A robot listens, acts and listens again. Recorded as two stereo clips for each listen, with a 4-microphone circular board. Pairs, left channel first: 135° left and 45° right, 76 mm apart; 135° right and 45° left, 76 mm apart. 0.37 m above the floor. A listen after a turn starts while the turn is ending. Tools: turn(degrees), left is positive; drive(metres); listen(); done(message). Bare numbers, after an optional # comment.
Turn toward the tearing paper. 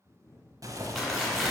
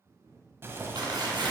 # The tearing paper: 50° left.
turn(50)
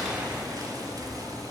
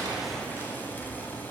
listen()
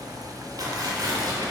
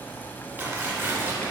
# The tearing paper is now 10° right.
turn(-10)
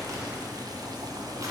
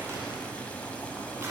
done("Facing the tearing paper, 2 to 4 m away.")